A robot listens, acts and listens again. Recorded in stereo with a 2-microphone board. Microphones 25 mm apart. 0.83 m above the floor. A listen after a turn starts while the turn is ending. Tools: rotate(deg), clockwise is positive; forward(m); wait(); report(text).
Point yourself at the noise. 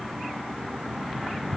wait()
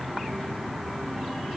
wait()
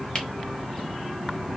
rotate(-40)
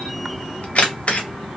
rotate(-95)
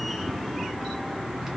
wait()
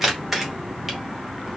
rotate(10)
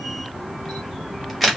report("Facing the camera shutter.")